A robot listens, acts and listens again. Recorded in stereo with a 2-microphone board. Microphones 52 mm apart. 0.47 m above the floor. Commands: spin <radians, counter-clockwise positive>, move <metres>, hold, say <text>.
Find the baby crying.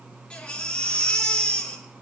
spin 0.35
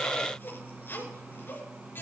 hold
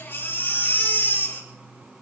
spin 2.36
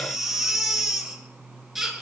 say Found it: a baby crying, straight ahead, over 4 m away.